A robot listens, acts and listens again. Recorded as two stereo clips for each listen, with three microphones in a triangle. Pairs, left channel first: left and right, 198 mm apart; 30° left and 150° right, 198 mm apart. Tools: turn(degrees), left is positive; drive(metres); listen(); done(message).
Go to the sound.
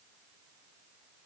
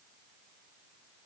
listen()
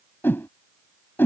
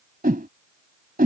turn(degrees=170)
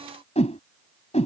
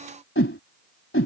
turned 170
turn(degrees=35)
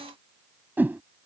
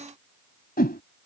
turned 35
turn(degrees=-10)
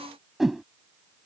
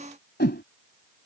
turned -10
drive(metres=1.0)
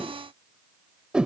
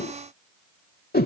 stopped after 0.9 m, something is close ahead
done("Arrived at the whoosh, straight ahead.")